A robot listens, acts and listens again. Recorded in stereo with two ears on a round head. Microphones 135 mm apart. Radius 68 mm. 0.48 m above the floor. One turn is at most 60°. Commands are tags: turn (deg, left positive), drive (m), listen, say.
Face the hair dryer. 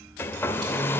<turn deg="15"/>
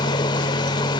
<turn deg="60"/>
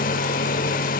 <turn deg="60"/>
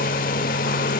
<turn deg="60"/>
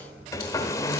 <turn deg="20"/>
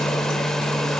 <say>Found it: a hair dryer, straight ahead, 1 to 2 m away.</say>